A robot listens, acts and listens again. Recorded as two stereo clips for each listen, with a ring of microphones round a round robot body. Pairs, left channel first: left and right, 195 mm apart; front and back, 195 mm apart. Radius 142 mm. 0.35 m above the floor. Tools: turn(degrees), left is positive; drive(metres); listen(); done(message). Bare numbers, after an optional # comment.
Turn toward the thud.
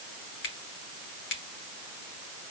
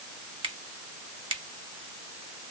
listen()
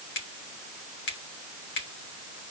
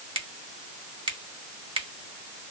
listen()
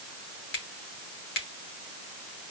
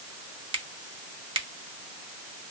done("I can't make out a thud, only a finger snap.")